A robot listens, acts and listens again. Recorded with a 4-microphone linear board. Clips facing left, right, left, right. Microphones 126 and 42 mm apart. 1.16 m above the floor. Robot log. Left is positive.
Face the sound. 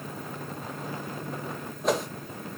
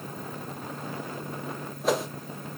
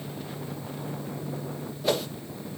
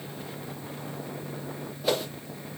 cmd yaw +30
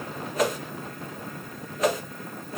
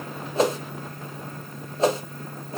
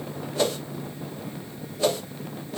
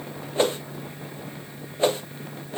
note: So it is at 30° right.
cmd yaw -30
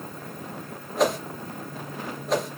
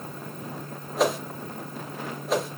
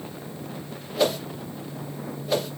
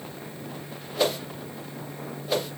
end: Found it: a whoosh, straight ahead.